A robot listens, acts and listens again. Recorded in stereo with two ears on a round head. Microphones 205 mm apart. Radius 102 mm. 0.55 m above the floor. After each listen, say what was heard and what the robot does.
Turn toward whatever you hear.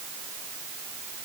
Keep listening.
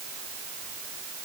Keep listening.
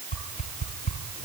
The whoosh: about 35° left or 145° left. Turn 35° left.
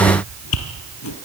So it is at 105° left. Turn 105° left.
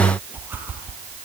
The whoosh is now 10° right. Turn 10° right.
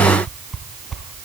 Facing the whoosh.